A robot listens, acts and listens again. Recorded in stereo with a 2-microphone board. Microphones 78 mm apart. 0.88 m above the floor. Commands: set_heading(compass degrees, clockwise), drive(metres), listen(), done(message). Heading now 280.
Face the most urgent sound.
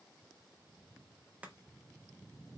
listen()
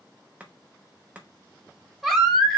set_heading(250)
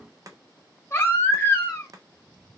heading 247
set_heading(97)
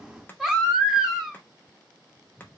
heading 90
done("Facing the baby crying.")